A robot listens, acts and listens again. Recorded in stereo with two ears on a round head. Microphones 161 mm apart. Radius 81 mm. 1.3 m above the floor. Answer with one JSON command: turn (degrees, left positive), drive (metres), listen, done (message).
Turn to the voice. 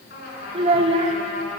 {"turn": -35}
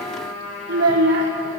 {"turn": -105}
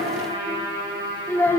{"turn": 10}
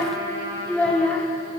{"done": "Found it: a child speaking, straight ahead."}